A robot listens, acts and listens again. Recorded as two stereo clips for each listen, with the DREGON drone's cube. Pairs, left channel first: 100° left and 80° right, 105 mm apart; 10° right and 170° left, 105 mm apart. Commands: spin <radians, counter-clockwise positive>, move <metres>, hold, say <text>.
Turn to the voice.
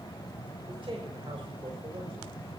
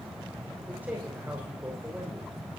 spin -2.01
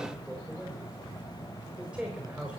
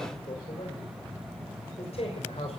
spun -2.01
say Facing the man speaking.